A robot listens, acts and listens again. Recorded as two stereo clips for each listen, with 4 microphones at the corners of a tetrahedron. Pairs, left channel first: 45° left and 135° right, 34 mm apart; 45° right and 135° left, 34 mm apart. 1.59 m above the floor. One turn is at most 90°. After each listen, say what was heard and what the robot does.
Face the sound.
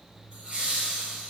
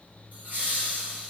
The laughter: 170° left. Turn 90° left.
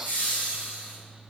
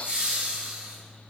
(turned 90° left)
The laughter is now 80° left. Turn 80° left.
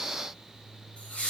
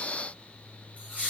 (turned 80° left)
Found it: laughter, straight ahead, 1 to 2 m away.